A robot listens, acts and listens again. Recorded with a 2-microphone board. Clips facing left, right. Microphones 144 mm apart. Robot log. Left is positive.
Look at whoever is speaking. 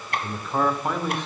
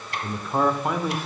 cmd yaw -30
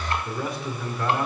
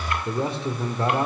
note: So it is at 145° right.
cmd yaw -145
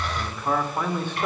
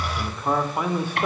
note: The man speaking is now 10° right.
cmd yaw -10
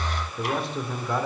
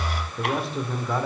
end: Found it: a man speaking, straight ahead.